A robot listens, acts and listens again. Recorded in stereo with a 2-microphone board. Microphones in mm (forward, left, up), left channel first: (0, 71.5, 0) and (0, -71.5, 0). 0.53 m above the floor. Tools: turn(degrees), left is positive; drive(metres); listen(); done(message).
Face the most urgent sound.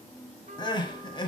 turn(degrees=35)
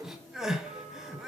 done("Facing the crying.")